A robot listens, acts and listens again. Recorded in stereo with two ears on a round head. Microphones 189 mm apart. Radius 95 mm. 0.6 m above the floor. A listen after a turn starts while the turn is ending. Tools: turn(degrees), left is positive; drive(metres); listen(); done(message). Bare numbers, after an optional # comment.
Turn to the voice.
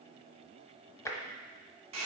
listen()
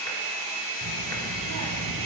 # The child speaking: about 75° right or 105° right.
turn(-75)
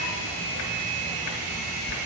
# So it is at 25° right.
turn(-25)
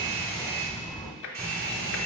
done("Facing the child speaking, under 1 m away.")